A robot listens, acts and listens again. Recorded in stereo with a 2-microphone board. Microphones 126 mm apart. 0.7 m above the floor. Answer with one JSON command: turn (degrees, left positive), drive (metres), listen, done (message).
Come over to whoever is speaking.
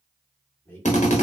{"turn": 15}
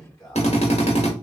{"turn": 150}
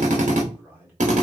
{"turn": -15}
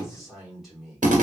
{"drive": 1.0}
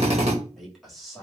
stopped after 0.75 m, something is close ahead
{"done": "I am next to the man speaking."}